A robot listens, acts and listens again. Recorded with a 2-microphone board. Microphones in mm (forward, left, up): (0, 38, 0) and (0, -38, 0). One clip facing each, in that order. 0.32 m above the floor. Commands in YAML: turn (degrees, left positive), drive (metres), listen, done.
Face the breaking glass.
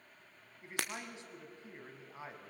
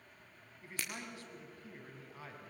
turn: 90
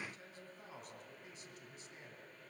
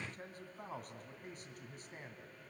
done: "I heard breaking glass from this way, but can't make it out now."